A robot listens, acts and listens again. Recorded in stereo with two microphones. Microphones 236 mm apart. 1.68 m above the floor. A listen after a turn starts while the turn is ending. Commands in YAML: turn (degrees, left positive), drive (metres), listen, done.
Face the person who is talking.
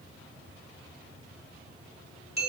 listen: true
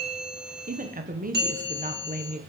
turn: -35
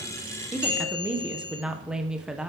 done: "Facing the woman speaking."